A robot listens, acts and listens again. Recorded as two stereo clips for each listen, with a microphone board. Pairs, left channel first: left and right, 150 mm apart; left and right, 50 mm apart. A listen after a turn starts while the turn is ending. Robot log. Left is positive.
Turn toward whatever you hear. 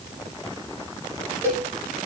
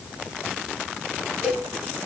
note: The cowbell: about 20° right or 160° right.
cmd yaw -20
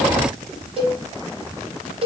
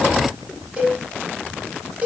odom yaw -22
note: So it is at 140° right.
cmd yaw -140
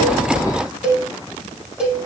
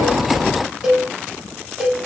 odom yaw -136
end: Facing the cowbell, over 4 m away.